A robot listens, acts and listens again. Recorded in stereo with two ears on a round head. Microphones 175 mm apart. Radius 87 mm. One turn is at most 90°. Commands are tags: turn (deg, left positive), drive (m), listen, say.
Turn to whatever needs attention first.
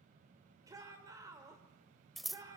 <turn deg="-20"/>
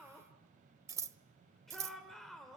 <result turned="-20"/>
<say>Facing the shout, 2 to 4 m away.</say>